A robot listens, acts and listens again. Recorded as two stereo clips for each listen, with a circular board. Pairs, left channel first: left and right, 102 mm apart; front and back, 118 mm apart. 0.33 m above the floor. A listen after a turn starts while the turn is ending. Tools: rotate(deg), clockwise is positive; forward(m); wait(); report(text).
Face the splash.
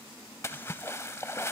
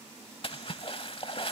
rotate(-30)
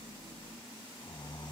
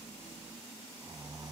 report("Facing where the splash came from. I can't hear it now.")